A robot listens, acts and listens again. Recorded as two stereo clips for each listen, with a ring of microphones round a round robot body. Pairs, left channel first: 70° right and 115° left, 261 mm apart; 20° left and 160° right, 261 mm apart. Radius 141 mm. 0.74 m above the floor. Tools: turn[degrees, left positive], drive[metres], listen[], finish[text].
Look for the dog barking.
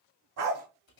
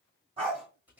Thought: The dog barking: 135° left.
Action: turn[135]
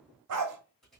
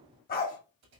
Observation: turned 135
Thought: The dog barking is now 85° left.
Action: turn[85]
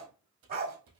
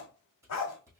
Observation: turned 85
Thought: The dog barking is now 55° left.
Action: turn[55]
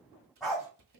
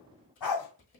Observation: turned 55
Thought: The dog barking is now 25° left.
Action: turn[25]
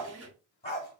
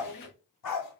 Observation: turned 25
Action: finish[Found it: a dog barking, straight ahead, 1 to 2 m away.]